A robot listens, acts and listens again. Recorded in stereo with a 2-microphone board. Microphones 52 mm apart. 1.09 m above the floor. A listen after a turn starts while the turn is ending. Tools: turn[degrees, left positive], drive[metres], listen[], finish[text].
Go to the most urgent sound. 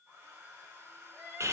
Action: turn[30]
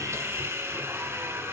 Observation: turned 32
Action: listen[]
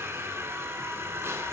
Action: listen[]
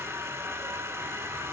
Action: finish[I heard crying, but can't make it out now. It was about 25° right or 140° left. I did not reach it.]